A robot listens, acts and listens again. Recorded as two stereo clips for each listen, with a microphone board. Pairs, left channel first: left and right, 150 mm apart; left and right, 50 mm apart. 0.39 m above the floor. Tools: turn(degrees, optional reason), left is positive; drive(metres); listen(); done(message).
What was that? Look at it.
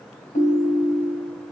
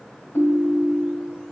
turn(degrees=70, reason="The ringtone: about 70° left or 110° left.")
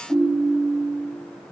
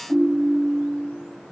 turn(degrees=10, reason="So it is at 10° left.")
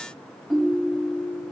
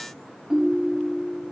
done("Facing the ringtone.")